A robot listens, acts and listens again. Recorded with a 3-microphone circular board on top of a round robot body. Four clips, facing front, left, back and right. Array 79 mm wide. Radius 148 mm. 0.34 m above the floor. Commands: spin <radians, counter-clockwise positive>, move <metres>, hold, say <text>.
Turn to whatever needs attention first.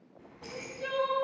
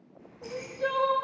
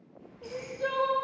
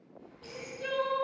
spin 2.09
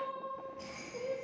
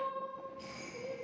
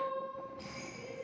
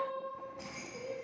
say Found it: crying, straight ahead, 1 to 2 m away.